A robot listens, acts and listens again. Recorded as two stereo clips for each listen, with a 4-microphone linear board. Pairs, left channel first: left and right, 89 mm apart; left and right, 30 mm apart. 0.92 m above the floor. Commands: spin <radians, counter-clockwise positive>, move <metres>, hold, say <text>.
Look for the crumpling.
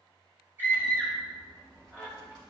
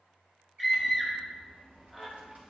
spin -1.05
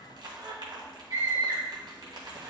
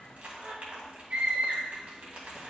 spin -1.05
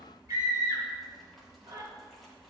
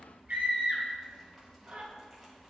say Found it: crumpling, straight ahead, 2 to 4 m away.